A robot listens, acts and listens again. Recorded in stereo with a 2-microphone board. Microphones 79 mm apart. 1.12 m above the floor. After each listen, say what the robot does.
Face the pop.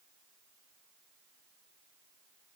Keep listening.
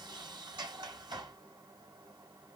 Keep listening.
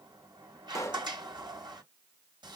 Turn 40° left.
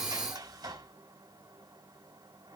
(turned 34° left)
Keep listening.
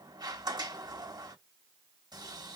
I heard a pop, but can't make it out now. It was about 5° left or 105° left.